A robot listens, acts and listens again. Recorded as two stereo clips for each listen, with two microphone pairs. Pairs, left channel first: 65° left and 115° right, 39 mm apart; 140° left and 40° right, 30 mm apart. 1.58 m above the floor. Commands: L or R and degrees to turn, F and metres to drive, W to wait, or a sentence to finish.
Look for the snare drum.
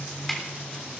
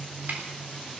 R20
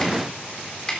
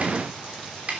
Found it: a snare drum, straight ahead, 2 to 4 m away.